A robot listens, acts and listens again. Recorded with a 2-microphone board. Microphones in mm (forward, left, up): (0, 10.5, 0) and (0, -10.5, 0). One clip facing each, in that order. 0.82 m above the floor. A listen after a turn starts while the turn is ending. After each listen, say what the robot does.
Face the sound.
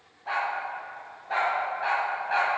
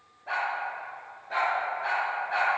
Turn 65° left.
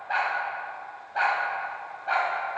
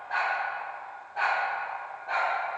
Turn 65° left.
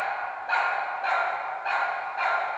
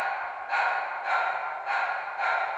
Turn 60° left.
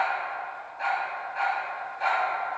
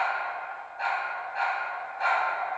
Turn 15° right.
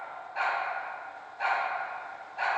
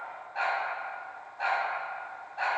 Found it: a dog barking, straight ahead.